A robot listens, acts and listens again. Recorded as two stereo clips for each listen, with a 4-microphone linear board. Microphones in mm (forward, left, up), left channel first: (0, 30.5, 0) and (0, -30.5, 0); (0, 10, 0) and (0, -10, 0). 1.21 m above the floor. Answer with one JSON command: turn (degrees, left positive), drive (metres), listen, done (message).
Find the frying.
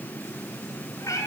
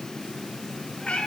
{"listen": true}
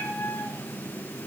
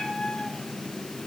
{"listen": true}
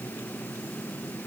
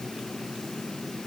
{"done": "I can't make out frying, only a cat meowing."}